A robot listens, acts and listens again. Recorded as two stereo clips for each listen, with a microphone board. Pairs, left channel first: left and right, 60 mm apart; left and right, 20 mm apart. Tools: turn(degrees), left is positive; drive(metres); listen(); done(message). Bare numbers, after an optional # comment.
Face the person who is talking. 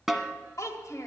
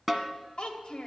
# The child speaking: about 60° left or 120° left.
turn(60)
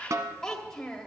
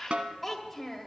# So it is at 10° left.
turn(10)
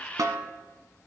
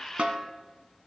listen()
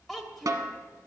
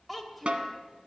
done("Facing the child speaking.")